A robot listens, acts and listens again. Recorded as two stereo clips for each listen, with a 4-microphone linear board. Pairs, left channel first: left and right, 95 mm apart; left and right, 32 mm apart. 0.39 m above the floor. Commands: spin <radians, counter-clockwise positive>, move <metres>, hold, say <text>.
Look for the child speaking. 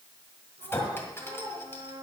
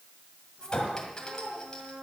spin -1.31
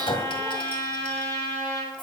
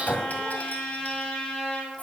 hold
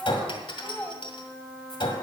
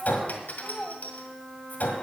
spin 0.26
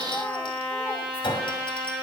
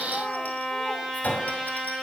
hold
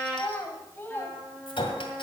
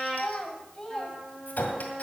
spin 0.44
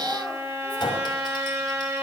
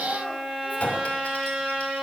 hold
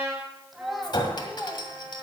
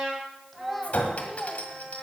say Facing the child speaking, 2 to 4 m away.